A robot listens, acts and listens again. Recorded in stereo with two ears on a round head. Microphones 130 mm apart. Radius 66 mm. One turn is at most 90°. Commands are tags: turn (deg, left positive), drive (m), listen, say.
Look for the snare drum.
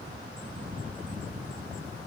<listen/>
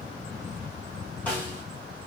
<turn deg="30"/>
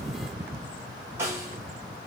<turn deg="-15"/>
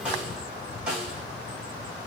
<say>Facing the snare drum, 1 to 2 m away.</say>